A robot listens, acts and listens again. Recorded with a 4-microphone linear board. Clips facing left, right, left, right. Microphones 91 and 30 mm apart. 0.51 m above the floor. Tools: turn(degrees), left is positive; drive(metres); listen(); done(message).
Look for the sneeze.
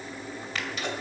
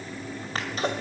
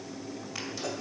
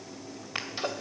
turn(degrees=-35)
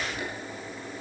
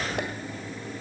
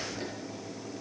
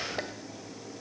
turn(degrees=-105)
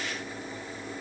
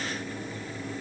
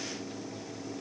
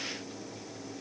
done("Facing where the sneeze came from. I can't hear it now.")